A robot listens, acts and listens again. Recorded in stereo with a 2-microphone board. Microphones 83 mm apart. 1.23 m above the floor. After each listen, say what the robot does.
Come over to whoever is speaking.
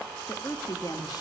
Turn 55° left.
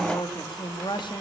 Turn 70° left.
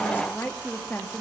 Turn 25° left.
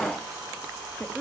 Turn 15° left.
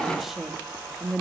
Drive 1.0 m forward.
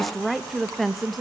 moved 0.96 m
Drive 1.0 m forward.
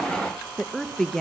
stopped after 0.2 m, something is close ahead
Arrived at the woman speaking, straight ahead.